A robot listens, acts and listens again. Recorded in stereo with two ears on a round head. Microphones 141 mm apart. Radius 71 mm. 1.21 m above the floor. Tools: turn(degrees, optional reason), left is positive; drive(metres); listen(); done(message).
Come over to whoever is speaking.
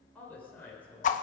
turn(degrees=30)
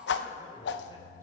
listen()
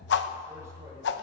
listen()
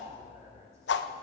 done("I heard a woman speaking, but can't make it out now. It was about 20° right or 140° left. I did not reach it.")